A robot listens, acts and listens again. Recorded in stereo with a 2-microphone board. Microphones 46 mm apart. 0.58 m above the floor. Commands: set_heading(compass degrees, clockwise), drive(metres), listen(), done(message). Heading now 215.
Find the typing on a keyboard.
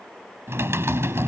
set_heading(305)
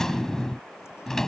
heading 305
set_heading(295)
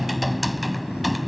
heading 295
done("Found it: typing on a keyboard, straight ahead.")